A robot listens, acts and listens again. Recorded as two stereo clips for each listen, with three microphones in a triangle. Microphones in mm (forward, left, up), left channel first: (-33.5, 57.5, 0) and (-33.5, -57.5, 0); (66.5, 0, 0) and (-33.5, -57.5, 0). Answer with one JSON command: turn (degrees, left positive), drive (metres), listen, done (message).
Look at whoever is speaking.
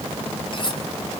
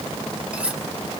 {"listen": true}
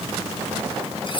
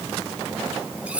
{"listen": true}
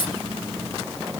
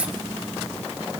{"done": "I can't make out anyone speaking, only cutlery clinking."}